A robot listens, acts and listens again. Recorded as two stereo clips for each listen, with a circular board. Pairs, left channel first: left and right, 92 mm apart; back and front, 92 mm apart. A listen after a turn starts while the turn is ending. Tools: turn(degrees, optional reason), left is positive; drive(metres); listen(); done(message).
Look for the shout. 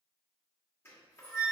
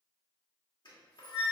listen()
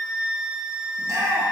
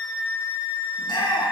turn(degrees=-145, reason="The shout: 145° right.")
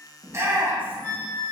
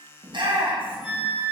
turn(degrees=-20, reason="The shout is now 20° right.")
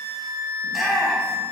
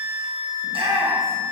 done("Found it: a shout, straight ahead.")